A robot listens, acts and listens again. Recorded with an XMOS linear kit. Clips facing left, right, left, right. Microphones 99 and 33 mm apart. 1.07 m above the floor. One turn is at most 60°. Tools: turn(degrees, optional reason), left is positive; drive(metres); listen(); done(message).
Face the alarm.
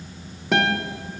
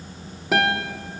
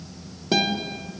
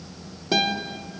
listen()
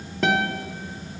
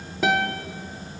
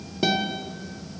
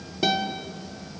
listen()
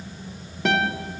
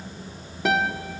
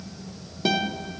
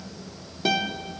done("I can't make out an alarm to turn to.")